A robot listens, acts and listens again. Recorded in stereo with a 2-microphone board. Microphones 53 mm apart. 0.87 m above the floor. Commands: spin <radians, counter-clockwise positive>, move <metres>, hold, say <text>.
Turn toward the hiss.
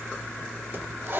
spin -0.79
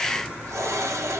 spin -1.57
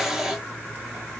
spin -0.17
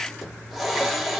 say Facing the hiss.